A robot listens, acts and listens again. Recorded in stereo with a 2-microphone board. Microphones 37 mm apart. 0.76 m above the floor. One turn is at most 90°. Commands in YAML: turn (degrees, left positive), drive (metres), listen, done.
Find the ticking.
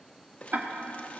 turn: -55
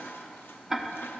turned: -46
turn: -10
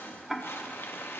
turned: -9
done: "Found it: ticking, straight ahead."